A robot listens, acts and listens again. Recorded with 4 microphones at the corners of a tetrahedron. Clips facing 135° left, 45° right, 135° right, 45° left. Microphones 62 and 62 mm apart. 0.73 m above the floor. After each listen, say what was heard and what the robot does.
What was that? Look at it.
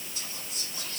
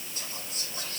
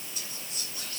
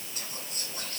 Found it: whispering, straight ahead.